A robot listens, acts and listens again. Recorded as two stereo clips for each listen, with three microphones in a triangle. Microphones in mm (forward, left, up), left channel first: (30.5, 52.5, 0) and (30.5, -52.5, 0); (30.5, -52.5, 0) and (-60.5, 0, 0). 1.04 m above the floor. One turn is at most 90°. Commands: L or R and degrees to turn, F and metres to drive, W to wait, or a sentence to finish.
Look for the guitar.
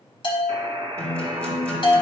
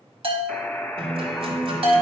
L90
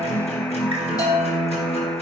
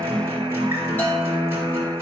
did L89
L80
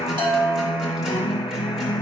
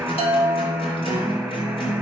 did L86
Facing the guitar, 2 to 4 m away.